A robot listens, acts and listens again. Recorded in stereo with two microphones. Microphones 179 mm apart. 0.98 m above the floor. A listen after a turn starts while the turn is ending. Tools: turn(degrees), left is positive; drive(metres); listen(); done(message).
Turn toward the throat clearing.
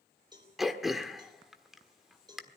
turn(degrees=30)
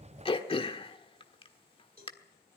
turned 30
turn(degrees=150)
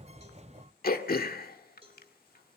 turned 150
turn(degrees=60)
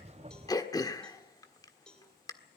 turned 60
turn(degrees=20)
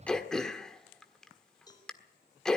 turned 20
done("Found it: throat clearing, straight ahead, 1 to 2 m away.")